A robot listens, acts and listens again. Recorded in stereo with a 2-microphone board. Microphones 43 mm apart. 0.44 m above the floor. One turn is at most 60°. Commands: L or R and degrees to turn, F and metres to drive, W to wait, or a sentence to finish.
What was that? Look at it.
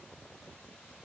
W
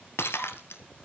L60
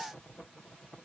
W
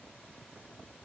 I heard breaking glass, but can't make it out now. It was about 15° left or 45° left.